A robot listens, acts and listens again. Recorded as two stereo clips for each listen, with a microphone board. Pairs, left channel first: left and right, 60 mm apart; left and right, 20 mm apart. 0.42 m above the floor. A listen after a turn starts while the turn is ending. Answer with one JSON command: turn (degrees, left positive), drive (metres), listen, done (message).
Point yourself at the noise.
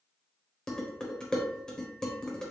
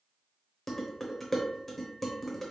{"turn": 30}
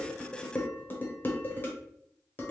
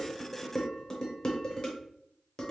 {"turn": 135}
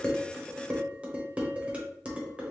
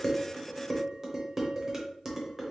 {"turn": -25}
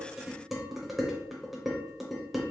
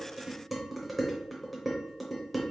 {"done": "Facing the dishes clattering, 1 to 2 m away."}